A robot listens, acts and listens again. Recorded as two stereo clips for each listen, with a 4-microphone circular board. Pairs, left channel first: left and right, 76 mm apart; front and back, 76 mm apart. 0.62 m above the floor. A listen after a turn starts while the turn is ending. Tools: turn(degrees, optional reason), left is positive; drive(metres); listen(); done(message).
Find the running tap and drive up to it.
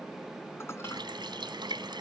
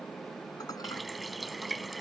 turn(degrees=-90, reason="The running tap: 90° right.")
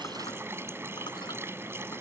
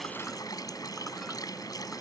turn(degrees=-35, reason="The running tap is now 35° right.")
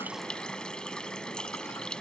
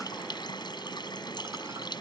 turn(degrees=10, reason="The running tap is now 10° left.")
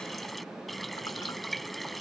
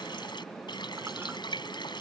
drive(metres=1.0)
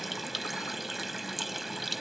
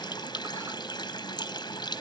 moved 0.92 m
drive(metres=1.0)
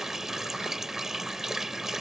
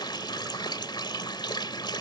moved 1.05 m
drive(metres=1.0)
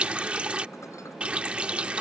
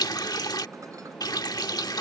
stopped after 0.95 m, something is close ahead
turn(degrees=-15, reason="The running tap is now 15° right.")
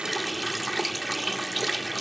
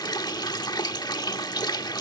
done("I am next to the running tap.")